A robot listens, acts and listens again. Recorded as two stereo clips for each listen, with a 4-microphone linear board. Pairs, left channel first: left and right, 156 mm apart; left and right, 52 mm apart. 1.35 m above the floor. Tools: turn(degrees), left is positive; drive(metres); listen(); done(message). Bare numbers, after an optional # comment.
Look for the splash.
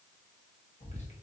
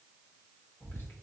listen()
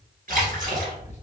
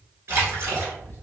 # The splash: about 60° right or 120° right.
turn(-60)
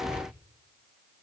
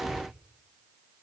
listen()
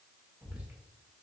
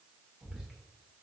done("I heard a splash, but can't make it out now. It was about straight ahead or 60° right.")